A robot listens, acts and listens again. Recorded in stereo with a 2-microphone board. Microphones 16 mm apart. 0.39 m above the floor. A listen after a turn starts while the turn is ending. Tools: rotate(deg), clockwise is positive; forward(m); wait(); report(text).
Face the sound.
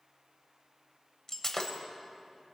rotate(-30)
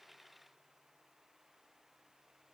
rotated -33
wait()
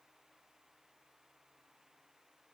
report("I heard breaking glass, but can't make it out now. It was about straight ahead or 115° left.")